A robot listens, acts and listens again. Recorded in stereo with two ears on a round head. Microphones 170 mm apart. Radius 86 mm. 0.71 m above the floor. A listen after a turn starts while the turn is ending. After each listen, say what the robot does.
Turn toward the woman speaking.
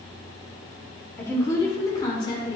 Turn 30° left.
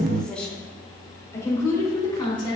Turn 25° left.
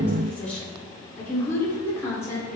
Turn 20° left.
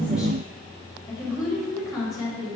Facing the woman speaking, 2 to 4 m away.